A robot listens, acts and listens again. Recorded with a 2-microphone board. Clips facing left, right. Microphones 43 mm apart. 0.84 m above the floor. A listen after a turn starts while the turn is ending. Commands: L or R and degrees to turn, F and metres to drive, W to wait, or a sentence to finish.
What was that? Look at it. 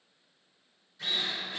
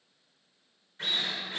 R45
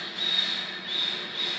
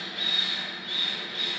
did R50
Found it: a drill, straight ahead.